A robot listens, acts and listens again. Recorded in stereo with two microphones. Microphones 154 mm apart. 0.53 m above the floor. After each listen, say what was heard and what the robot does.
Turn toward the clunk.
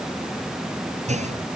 The clunk: about 50° right or 130° right. Turn 50° right.
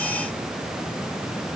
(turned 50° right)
Keep listening.
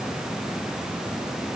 I heard a clunk, but can't make it out now. It was about straight ahead or 80° right.